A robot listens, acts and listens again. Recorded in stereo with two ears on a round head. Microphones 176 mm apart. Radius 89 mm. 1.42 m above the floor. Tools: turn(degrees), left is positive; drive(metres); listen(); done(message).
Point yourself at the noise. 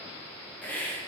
turn(degrees=30)
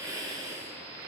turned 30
turn(degrees=-20)
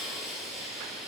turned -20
done("Facing the hiss, under 1 m away.")